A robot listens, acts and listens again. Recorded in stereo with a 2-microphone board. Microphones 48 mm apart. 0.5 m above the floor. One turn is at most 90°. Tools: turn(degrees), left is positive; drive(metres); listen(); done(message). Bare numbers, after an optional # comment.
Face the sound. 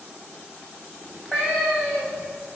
turn(30)
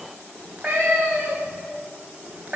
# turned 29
# So it is at 20° right.
turn(-20)
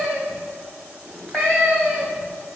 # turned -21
done("Facing the cat meowing.")